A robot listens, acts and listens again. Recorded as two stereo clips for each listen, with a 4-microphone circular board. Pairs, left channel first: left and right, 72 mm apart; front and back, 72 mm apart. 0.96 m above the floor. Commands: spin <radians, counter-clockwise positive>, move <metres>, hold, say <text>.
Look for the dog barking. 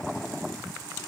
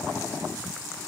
hold
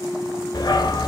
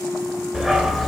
spin 1.57
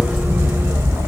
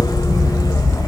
spin -0.61
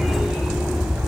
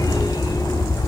spin -0.17
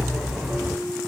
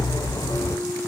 say Found it: a dog barking, straight ahead.